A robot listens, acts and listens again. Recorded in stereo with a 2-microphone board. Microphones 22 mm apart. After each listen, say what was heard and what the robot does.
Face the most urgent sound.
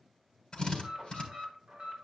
The alarm: about 40° right or 140° right. Turn 40° right.
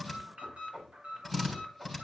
So it is at 95° right. Turn 95° right.
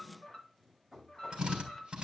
The alarm is now 30° left. Turn 30° left.
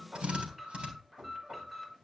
The alarm is now 10° right. Turn 10° right.
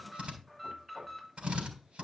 Facing the alarm.